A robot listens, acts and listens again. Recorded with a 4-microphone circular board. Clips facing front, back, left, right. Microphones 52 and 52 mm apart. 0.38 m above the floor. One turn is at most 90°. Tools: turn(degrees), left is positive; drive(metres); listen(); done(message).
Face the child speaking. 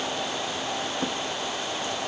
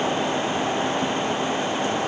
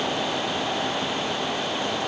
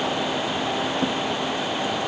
listen()
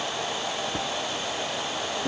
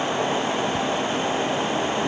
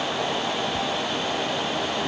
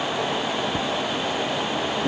listen()
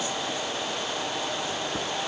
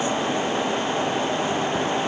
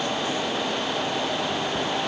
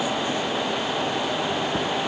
done("I can't make out a child speaking to turn to.")